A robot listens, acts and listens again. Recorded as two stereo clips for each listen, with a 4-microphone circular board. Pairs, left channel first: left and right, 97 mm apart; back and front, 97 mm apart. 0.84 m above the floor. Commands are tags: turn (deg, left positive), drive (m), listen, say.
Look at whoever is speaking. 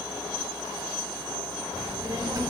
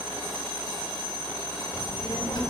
<turn deg="-145"/>
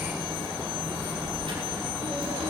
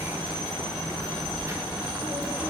<turn deg="-75"/>
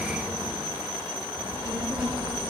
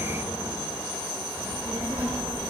<turn deg="-10"/>
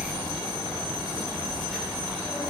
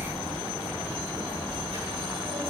<say>Found it: a child speaking, straight ahead, 2 to 4 m away.</say>